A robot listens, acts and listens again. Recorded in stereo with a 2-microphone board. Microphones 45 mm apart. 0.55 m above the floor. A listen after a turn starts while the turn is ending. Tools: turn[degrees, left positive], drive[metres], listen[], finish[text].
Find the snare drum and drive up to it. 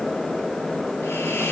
Action: listen[]
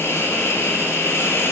Action: listen[]
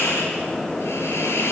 Action: finish[I can't make out a snare drum to turn to.]